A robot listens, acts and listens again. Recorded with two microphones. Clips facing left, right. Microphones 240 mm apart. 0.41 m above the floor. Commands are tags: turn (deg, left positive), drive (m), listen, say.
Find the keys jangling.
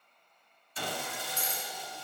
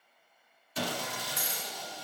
<turn deg="-30"/>
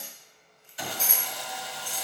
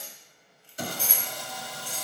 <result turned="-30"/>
<turn deg="-25"/>
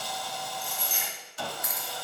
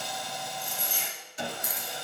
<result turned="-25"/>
<turn deg="-145"/>
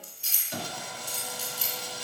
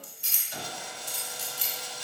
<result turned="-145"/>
<turn deg="-60"/>
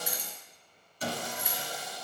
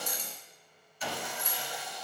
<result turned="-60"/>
<turn deg="10"/>
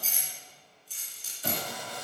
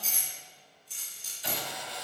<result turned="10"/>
<say>Facing the keys jangling, 2 to 4 m away.</say>